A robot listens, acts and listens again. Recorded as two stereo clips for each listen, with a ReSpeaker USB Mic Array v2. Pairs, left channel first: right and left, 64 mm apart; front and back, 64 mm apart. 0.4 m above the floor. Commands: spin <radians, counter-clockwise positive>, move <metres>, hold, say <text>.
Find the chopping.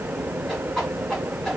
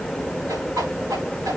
hold
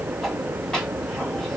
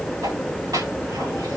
hold
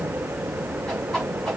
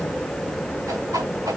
say I can't make out chopping to turn to.